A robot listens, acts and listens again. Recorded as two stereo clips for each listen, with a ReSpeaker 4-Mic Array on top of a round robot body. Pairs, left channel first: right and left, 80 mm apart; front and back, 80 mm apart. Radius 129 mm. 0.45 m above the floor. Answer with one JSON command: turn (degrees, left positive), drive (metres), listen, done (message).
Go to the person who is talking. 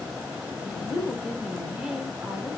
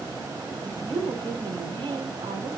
{"turn": 175}
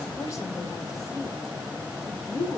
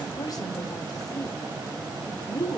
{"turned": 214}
{"turn": -40}
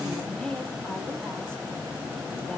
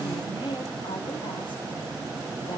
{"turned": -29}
{"turn": -10}
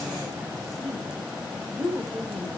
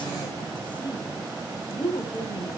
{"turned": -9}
{"drive": 1.0}
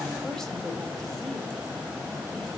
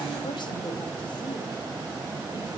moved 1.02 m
{"listen": true}
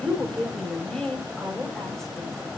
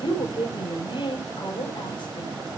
{"drive": 1.0}
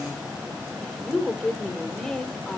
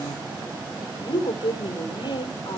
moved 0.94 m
{"drive": 1.0}
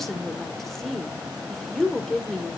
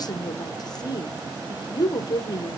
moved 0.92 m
{"drive": 1.0}
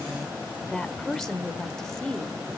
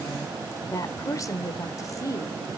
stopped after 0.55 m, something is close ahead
{"done": "I am next to the woman speaking."}